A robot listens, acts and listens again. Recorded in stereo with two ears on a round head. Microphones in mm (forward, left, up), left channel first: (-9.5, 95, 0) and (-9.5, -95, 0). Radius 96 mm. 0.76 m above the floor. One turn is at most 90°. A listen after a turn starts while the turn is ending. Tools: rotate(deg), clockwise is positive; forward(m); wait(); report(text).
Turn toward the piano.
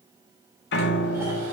rotate(-55)
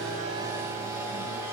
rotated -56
wait()
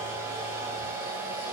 wait()
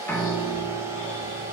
rotate(-10)
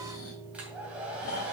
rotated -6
report("Found it: a piano, straight ahead, 1 to 2 m away.")